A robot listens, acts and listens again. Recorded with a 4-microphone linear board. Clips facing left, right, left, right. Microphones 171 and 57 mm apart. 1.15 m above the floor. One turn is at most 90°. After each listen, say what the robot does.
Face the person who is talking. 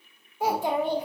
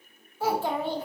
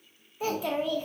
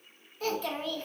Turn 15° left.
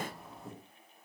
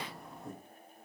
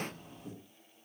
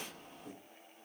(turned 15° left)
Facing the child speaking.